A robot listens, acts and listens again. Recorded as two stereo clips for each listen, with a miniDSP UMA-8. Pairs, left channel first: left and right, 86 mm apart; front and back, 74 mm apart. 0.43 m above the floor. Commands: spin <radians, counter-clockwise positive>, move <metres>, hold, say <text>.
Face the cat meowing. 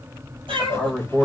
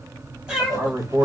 spin -1.75
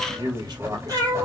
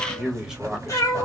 spin -0.87
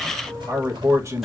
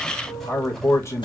say Facing the cat meowing.